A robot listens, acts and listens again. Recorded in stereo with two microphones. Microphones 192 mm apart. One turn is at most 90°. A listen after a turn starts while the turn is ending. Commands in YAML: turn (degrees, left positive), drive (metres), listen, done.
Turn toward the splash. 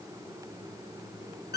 listen: true
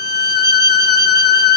listen: true
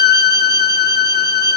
done: "I can't make out a splash to turn to."